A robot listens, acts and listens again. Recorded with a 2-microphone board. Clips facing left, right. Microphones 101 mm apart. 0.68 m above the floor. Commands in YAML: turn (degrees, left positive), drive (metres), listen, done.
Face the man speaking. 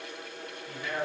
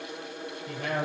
turn: -70
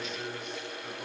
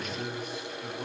turn: -10
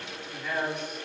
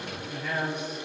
done: "Found it: a man speaking, straight ahead, 2 to 4 m away."